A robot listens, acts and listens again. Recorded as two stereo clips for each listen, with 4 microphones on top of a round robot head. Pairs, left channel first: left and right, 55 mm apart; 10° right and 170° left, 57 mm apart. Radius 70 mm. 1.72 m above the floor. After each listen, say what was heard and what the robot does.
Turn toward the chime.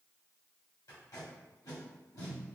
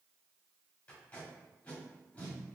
Keep listening.
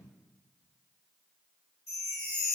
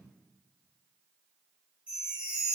The chime: 100° left. Turn 100° left.
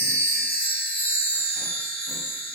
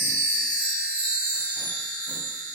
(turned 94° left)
Facing the chime.